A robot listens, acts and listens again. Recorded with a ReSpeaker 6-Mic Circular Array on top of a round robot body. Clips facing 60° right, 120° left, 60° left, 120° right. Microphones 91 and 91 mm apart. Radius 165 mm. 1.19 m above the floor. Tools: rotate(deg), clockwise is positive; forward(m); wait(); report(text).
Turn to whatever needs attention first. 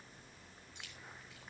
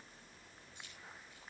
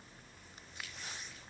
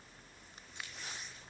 wait()
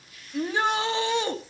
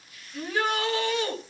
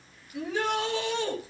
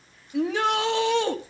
rotate(125)
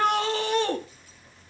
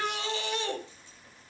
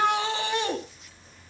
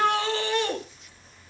rotate(15)
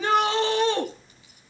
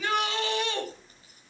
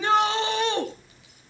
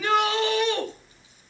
report("Found it: a shout, straight ahead.")